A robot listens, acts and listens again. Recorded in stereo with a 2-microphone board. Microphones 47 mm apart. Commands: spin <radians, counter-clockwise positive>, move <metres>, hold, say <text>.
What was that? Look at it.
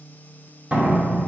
spin -0.52
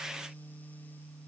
hold
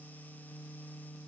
say I heard a door slam, but can't make it out now. It was about straight ahead or 120° right.